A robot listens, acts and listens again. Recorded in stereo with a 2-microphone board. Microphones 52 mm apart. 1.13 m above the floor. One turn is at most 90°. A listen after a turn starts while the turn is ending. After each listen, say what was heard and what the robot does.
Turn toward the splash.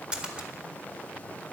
The splash: about 15° right or 165° right. Turn 15° right.
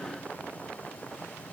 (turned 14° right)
Keep listening.
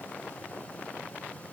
I heard a splash, but can't make it out now. It was about 5° right or 150° right.